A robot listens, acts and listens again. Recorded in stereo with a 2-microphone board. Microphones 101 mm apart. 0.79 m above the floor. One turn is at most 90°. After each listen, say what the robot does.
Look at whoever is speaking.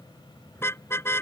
Keep listening.
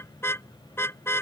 Keep listening.
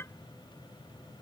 I can't make out anyone speaking, only a car horn.